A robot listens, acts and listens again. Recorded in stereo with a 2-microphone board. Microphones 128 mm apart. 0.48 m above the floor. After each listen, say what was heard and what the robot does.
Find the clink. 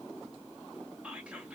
Keep listening.
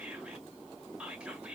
Keep listening.
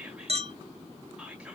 The clink: about 55° right or 125° right. Turn 55° right.
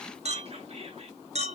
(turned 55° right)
So it is at 65° right. Turn 65° right.
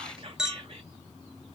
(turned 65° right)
Facing the clink.